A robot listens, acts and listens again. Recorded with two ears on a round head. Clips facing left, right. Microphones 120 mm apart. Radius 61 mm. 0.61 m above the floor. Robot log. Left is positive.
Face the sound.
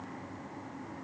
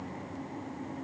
cmd idle
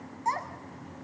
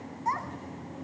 note: The child speaking: about 30° left or 150° left.
cmd yaw +30
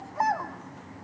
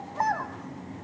note: So it is at 10° left.
cmd yaw +10
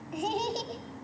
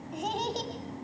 note: The child speaking is now 10° left.
cmd yaw +10
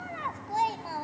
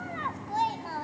note: The child speaking is now 10° left.
cmd yaw +10
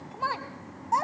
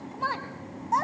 end: Found it: a child speaking, straight ahead, 2 to 4 m away.